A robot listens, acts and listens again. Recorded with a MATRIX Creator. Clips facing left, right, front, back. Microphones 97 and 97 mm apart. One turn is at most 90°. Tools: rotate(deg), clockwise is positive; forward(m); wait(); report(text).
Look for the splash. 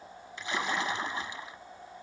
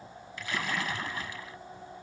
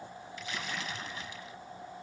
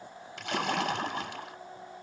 rotate(-90)
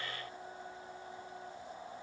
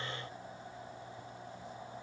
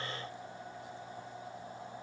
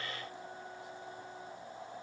rotate(-65)
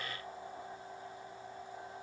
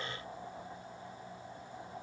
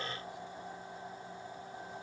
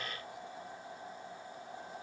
report("Facing where the splash came from. I can't hear it now.")